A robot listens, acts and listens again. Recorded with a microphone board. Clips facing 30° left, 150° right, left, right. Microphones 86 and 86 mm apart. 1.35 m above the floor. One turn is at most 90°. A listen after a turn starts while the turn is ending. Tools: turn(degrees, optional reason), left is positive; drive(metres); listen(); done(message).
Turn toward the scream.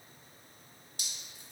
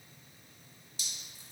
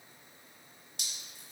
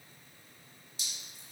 listen()
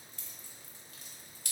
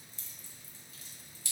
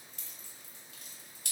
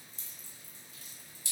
listen()
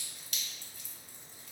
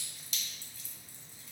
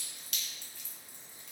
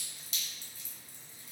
done("I can't make out a scream to turn to.")